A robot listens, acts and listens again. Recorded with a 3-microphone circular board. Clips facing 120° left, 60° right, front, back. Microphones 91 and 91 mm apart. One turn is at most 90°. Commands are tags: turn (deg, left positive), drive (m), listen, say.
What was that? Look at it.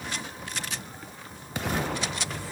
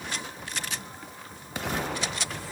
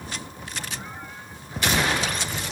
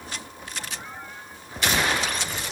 <listen/>
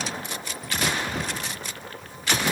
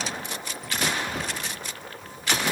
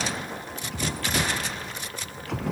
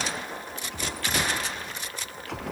<listen/>
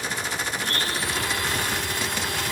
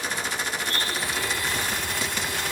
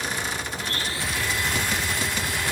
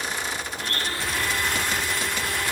<turn deg="90"/>
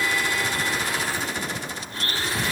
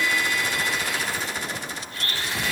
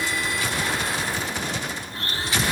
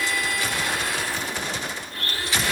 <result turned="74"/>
<turn deg="65"/>
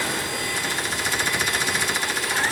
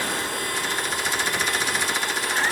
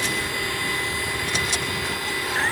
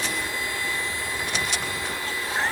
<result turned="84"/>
<turn deg="-15"/>
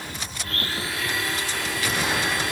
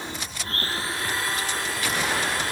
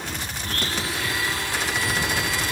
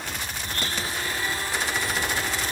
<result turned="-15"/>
<say>Facing the blender, over 4 m away.</say>